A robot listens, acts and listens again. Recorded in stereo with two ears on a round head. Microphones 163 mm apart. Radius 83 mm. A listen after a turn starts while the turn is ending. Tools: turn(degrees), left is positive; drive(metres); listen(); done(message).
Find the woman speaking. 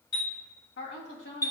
turn(degrees=65)
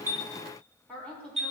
done("Found it: a woman speaking, straight ahead.")